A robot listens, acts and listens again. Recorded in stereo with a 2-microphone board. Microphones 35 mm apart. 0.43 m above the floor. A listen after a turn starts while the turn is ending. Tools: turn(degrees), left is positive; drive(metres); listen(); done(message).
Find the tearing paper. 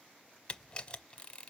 listen()
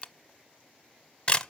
listen()
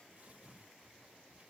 turn(degrees=-45)
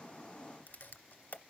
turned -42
listen()
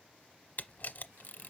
listen()
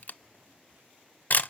done("I heard tearing paper, but can't make it out now. It was about 5° right or 90° right.")